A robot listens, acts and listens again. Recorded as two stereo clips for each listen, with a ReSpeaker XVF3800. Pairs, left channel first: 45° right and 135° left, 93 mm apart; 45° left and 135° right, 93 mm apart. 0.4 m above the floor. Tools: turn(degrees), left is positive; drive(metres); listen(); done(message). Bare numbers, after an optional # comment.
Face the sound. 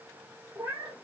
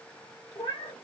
# The cat meowing: 70° left.
turn(70)
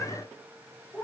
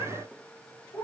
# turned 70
# The cat meowing is now 20° left.
turn(20)
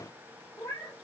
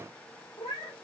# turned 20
done("Facing the cat meowing, 2 to 4 m away.")